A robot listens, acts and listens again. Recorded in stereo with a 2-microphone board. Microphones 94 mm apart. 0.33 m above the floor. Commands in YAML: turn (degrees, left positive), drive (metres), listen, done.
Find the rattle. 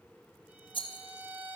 turn: 65
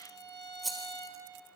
done: "Found it: a rattle, straight ahead, 1 to 2 m away."